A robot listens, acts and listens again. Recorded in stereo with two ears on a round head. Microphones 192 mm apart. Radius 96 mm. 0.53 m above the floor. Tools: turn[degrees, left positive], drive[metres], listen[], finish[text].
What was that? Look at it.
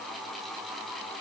Action: listen[]
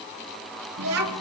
Action: turn[-90]
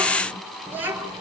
Thought: So it is at 10° right.
Action: turn[-10]
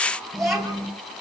Action: finish[Facing the child speaking.]